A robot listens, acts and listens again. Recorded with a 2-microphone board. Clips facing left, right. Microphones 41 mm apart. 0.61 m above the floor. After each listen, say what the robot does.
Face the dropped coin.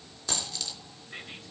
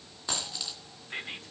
Turn 20° right.
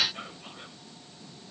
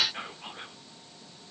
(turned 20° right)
Keep listening.
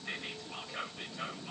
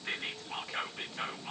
I heard a dropped coin, but can't make it out now. It was about straight ahead or 140° right.